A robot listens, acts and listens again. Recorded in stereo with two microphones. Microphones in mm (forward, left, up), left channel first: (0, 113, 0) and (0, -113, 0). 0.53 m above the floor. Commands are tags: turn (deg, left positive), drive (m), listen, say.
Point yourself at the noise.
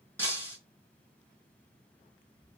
<turn deg="30"/>
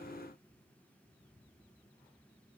<listen/>
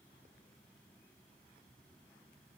<say>I heard breaking glass, but can't make it out now. It was about 20° right or 140° left.</say>